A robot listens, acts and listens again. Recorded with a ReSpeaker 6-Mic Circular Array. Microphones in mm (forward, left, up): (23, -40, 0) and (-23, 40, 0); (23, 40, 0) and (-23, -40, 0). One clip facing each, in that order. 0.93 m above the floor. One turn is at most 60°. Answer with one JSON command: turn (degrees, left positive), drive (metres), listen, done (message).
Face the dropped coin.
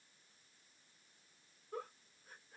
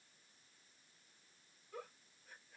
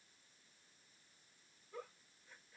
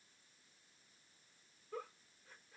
{"listen": true}
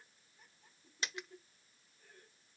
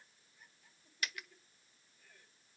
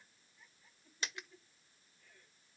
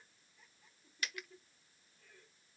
{"done": "Facing the dropped coin, under 1 m away."}